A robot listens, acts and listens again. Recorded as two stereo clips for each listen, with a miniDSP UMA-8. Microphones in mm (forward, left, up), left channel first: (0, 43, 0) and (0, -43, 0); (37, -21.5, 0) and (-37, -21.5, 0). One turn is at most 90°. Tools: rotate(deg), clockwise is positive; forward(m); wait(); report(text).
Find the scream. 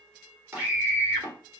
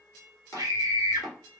rotate(90)
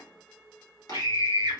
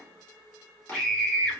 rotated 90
rotate(75)
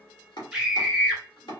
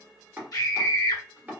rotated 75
rotate(10)
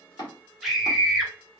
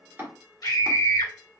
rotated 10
report("Found it: a scream, straight ahead, 1 to 2 m away.")